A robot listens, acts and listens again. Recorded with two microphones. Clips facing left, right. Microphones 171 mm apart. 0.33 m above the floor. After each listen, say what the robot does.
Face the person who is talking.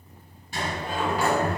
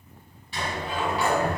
Keep listening.
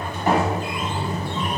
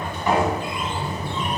Keep listening.
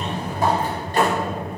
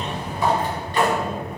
I can't make out anyone speaking, only a sliding door.